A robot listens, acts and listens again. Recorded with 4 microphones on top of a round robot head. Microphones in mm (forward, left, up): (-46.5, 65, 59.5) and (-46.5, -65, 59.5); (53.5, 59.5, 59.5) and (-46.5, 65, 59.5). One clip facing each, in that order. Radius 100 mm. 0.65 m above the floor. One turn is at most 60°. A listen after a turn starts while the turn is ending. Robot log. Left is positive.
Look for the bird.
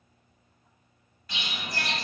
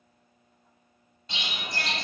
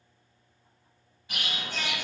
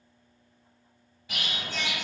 note: The bird: 155° right.
cmd yaw -60
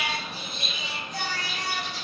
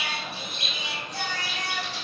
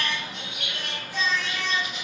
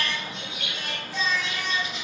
note: The bird is now 115° right.
cmd yaw -60
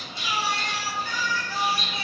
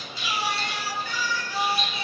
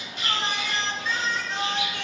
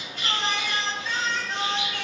note: The bird is now 70° right.
cmd yaw -60
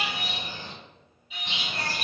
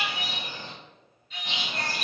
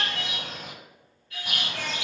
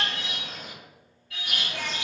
note: The bird is now 30° right.
cmd yaw -30
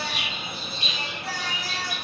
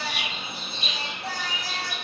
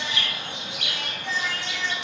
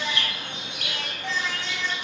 end: Found it: a bird, straight ahead.